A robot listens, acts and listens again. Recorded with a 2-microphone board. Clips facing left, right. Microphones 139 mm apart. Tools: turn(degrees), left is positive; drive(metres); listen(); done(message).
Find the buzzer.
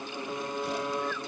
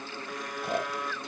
turn(degrees=25)
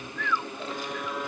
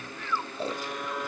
done("Facing the buzzer.")